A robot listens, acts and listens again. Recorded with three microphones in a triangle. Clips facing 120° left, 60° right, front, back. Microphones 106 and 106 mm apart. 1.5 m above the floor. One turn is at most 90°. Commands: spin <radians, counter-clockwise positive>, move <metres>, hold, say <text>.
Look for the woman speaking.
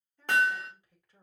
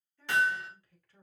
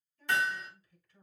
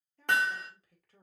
spin -1.57
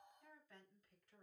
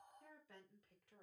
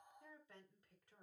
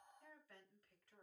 spin -1.22
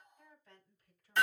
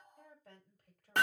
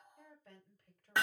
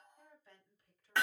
spin -0.70
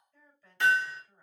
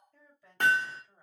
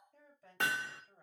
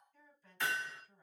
spin 0.26
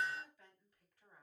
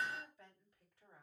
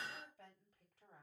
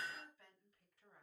say Found it: a woman speaking, straight ahead, over 4 m away.